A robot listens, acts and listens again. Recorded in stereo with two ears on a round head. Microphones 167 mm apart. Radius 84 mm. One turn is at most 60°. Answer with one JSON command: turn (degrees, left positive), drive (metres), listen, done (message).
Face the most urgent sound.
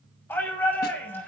{"turn": 30}
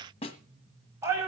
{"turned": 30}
{"turn": -15}
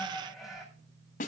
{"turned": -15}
{"done": "Found it: a shout, straight ahead, over 4 m away."}